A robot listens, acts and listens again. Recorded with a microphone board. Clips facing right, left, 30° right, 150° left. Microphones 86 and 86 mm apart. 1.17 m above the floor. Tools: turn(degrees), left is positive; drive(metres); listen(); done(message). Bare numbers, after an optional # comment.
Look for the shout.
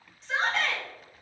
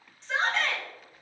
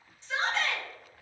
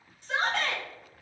# The shout: straight behind.
turn(180)
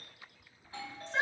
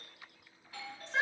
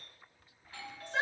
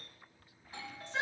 done("Facing the shout, 1 to 2 m away.")